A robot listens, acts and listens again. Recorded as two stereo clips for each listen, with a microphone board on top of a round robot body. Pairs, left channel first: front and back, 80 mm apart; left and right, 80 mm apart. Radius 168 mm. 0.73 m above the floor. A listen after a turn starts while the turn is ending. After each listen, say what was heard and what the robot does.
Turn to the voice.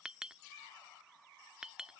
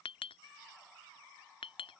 Keep listening.
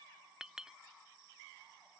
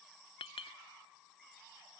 Keep listening.
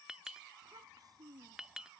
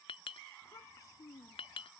The child speaking: 140° left. Turn 140° left.
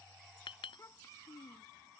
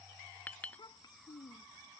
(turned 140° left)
The child speaking is now 55° left. Turn 55° left.
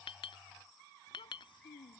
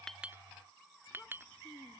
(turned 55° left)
The child speaking is now 15° left. Turn 15° left.
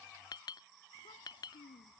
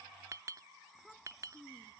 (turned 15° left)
Facing the child speaking.